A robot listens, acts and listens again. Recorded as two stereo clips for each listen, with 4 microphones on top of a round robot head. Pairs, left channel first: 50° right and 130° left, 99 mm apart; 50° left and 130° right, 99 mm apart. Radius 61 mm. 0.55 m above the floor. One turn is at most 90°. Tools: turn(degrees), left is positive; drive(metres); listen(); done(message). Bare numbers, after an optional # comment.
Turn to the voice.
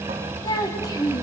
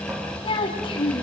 done("Found it: a child speaking, straight ahead, 2 to 4 m away.")